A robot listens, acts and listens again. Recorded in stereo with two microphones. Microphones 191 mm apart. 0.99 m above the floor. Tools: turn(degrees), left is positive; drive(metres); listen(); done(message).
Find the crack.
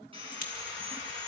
turn(degrees=45)
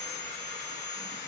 listen()
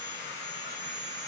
done("I heard a crack, but can't make it out now. It was about straight ahead or 90° left.")